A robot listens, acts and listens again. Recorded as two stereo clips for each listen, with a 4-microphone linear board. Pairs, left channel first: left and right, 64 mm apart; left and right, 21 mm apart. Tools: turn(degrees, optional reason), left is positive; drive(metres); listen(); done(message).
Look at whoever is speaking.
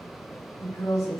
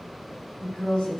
turn(degrees=60, reason="The woman speaking: about 60° left or 120° left.")
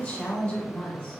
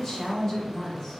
turn(degrees=20, reason="So it is at 20° left.")
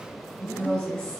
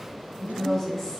turn(degrees=10, reason="The woman speaking is now 10° left.")
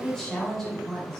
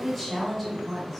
done("Found it: a woman speaking, straight ahead.")